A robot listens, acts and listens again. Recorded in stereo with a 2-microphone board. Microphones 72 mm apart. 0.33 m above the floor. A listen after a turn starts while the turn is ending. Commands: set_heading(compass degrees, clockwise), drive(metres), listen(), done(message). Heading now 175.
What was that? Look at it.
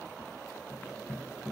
listen()
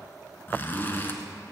set_heading(145)
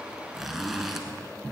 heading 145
done("Found it: a zipper, straight ahead, 1 to 2 m away.")